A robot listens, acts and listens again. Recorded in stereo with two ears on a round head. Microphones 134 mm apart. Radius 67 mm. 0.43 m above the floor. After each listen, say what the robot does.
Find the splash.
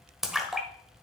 Turn 30° right.
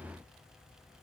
Keep listening.
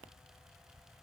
I heard a splash, but can't make it out now. It was about 25° left or 145° right.